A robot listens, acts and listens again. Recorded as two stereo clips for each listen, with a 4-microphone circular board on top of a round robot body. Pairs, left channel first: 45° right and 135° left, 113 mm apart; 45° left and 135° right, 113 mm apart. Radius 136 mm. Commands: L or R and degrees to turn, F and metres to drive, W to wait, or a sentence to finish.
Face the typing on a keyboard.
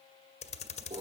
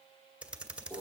R55
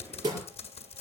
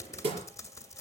R15
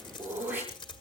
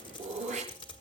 Facing the typing on a keyboard, 1 to 2 m away.